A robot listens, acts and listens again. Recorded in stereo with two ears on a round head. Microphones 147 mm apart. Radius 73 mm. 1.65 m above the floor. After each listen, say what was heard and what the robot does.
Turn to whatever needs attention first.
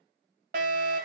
The fire alarm: about 55° right or 125° right. Turn 55° right.
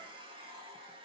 Keep listening.
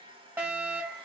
So it is at 15° right. Turn 15° right.
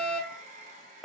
Facing the fire alarm.